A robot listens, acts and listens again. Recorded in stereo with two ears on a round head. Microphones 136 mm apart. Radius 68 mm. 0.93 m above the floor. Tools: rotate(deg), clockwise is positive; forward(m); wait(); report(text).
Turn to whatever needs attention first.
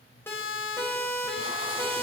rotate(-15)
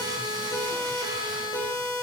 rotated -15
rotate(-155)
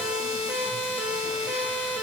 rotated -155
rotate(15)
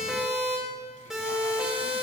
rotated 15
report("Found it: a siren, straight ahead, over 4 m away.")